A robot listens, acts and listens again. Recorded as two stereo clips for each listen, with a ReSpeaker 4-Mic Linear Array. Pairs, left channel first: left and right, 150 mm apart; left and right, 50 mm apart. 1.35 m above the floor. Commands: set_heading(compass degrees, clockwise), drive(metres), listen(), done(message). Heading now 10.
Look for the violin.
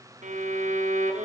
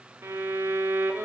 set_heading(65)
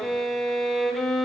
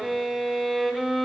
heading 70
done("Found it: a violin, straight ahead, under 1 m away.")